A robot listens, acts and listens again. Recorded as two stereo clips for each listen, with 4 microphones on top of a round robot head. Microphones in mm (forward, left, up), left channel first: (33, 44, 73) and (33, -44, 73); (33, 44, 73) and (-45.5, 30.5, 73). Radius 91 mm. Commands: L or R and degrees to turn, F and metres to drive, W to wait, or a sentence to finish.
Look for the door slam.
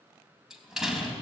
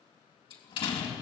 Facing the door slam, 2 to 4 m away.